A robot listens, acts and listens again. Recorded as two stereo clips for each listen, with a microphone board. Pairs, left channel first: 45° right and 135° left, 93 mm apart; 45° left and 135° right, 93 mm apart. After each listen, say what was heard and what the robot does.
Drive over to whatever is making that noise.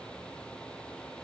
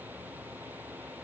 Keep listening.
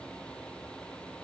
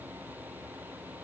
Keep listening.
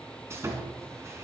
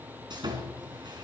The sawing: 165° right. Turn 165° right.
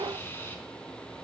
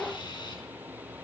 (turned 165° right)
The sawing is now 20° left. Turn 20° left.
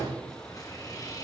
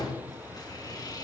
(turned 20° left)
Drive 1.0 m forward.
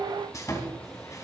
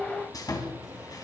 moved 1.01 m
Drive 1.0 m forward.
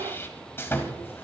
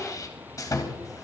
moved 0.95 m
The sawing is now 10° left. Turn 10° left.
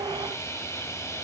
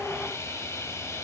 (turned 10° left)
Drive 1.0 m forward.
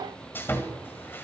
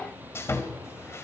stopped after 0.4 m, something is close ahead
I am next to the sawing.